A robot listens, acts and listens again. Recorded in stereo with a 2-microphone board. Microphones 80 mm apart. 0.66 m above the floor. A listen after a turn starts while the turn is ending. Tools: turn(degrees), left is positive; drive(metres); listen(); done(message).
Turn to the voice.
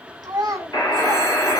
turn(degrees=-55)
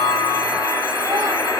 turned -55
listen()
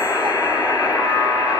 listen()
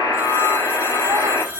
done("I heard a child speaking, but can't make it out now. It was about straight ahead or 70° right.")